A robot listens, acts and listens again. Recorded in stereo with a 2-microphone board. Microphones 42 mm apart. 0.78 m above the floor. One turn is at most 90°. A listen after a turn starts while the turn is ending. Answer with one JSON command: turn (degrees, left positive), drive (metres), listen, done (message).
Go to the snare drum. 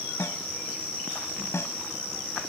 {"turn": 90}
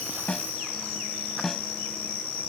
{"drive": 1.0}
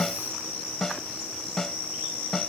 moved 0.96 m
{"drive": 1.0}
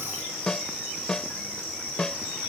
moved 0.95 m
{"turn": 15}
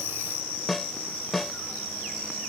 {"drive": 1.0}
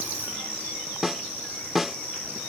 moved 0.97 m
{"drive": 1.0}
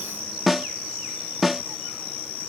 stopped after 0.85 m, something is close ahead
{"done": "Arrived at the snare drum, straight ahead."}